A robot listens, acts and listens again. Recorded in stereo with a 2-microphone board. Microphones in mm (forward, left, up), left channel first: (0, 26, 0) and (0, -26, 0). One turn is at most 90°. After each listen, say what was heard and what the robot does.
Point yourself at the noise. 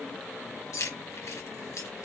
Turn 90° left.
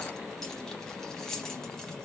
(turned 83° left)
Found it: keys jangling, straight ahead.